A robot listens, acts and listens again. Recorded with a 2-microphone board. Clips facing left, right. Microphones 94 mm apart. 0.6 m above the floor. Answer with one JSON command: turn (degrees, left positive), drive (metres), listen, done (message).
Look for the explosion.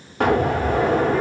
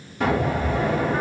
{"turn": 65}
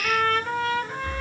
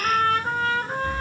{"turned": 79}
{"listen": true}
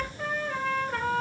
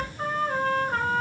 {"done": "I heard an explosion, but can't make it out now. It was about 15° right or 35° left."}